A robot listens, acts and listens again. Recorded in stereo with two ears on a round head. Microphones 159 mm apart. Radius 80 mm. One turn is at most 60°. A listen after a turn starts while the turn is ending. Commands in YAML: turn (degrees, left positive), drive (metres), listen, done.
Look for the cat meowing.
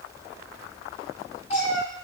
turn: 40
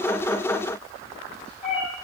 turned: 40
turn: 35
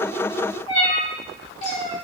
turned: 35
turn: 40
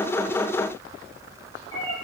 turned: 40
turn: 25
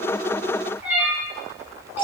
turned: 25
turn: -10
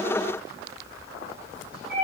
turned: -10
done: "Facing the cat meowing, 1 to 2 m away."